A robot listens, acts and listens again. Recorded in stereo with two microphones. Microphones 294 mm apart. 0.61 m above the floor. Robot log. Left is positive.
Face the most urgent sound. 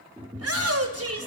note: The shout: about 60° right or 120° right.
cmd yaw -60
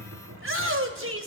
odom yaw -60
note: So it is at 50° right.
cmd yaw -50
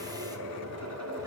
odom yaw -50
cmd idle
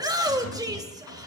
note: The shout is now 15° right.
cmd yaw -15
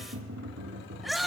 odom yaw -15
end: Facing the shout.